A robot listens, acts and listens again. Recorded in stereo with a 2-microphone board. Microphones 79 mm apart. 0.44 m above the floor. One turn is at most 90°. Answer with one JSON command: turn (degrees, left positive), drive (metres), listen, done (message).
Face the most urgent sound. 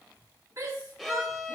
{"turn": -40}
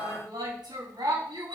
{"turn": -90}
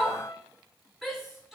{"done": "Facing the shout."}